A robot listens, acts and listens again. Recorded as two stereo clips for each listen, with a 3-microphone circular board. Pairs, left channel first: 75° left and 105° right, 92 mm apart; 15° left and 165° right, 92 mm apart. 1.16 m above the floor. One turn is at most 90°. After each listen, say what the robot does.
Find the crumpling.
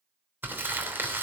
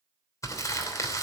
Turn 40° right.
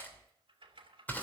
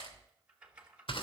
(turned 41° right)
Found it: crumpling, straight ahead.